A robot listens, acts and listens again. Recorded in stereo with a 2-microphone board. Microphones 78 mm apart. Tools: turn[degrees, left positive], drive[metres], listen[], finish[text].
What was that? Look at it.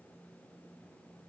Action: listen[]
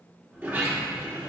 Thought: The sliding door: about 30° right or 150° right.
Action: turn[-30]
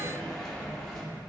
Action: finish[Found it: a sliding door, straight ahead, 1 to 2 m away.]